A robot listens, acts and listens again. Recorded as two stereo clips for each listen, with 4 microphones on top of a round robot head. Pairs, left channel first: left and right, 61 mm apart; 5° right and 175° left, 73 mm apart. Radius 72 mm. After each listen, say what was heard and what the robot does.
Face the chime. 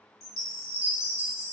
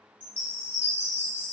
The chime: 60° left. Turn 60° left.
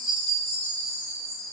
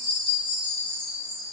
Facing the chime.